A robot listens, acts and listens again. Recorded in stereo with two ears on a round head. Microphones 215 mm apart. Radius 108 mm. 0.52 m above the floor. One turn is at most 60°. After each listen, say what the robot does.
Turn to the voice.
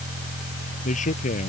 Turn 35° left.
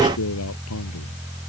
Turn 60° left.
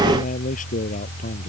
Turn 35° left.
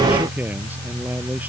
Facing the man speaking.